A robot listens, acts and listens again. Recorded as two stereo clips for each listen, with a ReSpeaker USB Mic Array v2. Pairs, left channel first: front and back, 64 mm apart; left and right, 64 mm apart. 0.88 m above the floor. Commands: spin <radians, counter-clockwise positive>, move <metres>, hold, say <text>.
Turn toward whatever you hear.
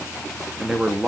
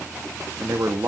spin -1.83
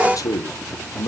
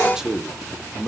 spin -0.17
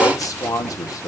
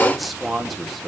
say Facing the man speaking, 1 to 2 m away.